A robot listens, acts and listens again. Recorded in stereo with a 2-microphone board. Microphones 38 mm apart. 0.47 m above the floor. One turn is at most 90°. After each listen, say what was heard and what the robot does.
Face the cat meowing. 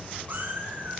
The cat meowing: about 65° right or 115° right. Turn 65° right.
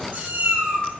So it is at 50° right. Turn 50° right.
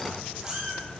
The cat meowing is now 15° right. Turn 15° right.
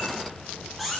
Facing the cat meowing.